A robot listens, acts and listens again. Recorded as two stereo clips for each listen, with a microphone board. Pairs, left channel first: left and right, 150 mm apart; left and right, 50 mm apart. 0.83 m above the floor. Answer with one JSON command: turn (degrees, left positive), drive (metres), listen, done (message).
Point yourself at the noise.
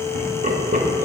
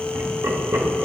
{"turn": -60}
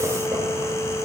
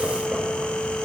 {"listen": true}
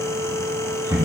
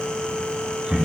{"turn": -25}
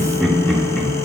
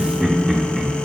{"done": "Found it: laughter, straight ahead."}